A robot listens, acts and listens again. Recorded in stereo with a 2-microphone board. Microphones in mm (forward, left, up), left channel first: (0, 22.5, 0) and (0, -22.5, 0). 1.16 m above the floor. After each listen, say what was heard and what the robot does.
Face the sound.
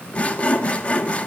The sawing: about 30° left or 150° left. Turn 30° left.
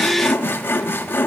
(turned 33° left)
So it is at 115° left. Turn 115° left.
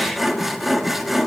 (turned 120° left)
Found it: sawing, straight ahead, 1 to 2 m away.